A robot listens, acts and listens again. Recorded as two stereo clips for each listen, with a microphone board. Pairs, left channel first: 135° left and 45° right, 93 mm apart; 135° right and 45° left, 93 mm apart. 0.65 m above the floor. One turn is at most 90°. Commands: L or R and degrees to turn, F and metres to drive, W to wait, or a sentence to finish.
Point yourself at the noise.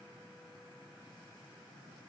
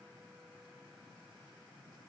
W
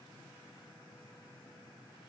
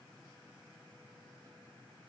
W
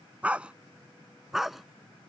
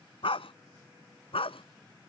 R90
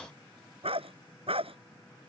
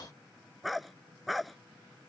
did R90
R45
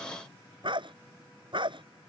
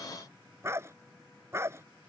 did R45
R15
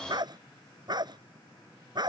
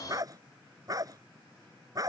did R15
Found it: a dog barking, straight ahead.